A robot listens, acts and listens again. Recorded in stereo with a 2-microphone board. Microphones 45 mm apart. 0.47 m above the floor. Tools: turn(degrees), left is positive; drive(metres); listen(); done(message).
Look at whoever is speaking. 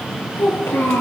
turn(degrees=55)
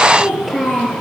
done("Facing the child speaking.")